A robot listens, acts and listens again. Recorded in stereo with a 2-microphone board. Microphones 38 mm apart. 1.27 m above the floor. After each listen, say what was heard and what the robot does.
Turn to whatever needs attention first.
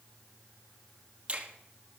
Keep listening.
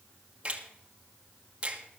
Keep listening.
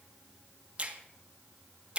I can't make out anything urgent, only a finger snap.